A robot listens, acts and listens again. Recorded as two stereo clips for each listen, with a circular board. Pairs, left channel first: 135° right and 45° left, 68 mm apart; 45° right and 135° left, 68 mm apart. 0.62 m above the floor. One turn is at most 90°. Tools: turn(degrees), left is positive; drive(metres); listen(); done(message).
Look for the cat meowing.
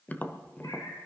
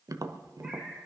turn(degrees=-90)
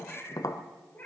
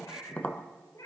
turn(degrees=-70)
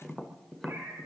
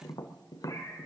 turn(degrees=-10)
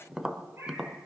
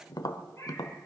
done("Facing the cat meowing, over 4 m away.")